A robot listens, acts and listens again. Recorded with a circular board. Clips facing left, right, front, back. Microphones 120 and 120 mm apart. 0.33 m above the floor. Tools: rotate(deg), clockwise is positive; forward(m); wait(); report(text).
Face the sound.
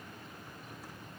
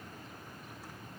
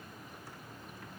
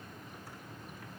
wait()
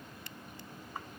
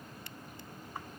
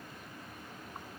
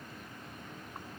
wait()
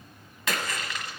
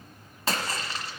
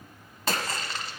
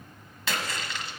rotate(40)
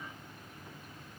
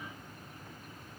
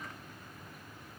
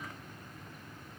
report("I heard a splash from this way, but can't make it out now.")